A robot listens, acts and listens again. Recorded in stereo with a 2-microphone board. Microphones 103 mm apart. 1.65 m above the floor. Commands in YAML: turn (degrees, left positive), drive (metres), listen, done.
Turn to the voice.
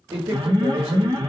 turn: -75
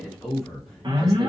done: "Facing the man speaking, 1 to 2 m away."